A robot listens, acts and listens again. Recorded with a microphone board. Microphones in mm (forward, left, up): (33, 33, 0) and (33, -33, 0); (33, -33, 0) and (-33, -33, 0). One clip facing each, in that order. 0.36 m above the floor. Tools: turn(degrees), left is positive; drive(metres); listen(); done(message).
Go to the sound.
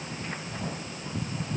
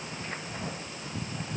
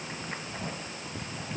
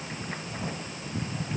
listen()
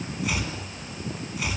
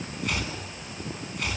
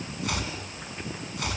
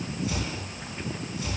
drive(metres=1.0)
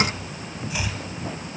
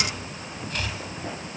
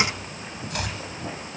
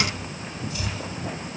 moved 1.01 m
turn(degrees=10)
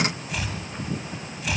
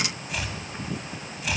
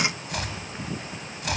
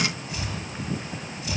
drive(metres=1.0)
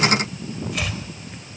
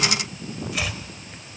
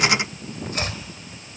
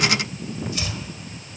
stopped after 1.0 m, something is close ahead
done("I am next to the chopping.")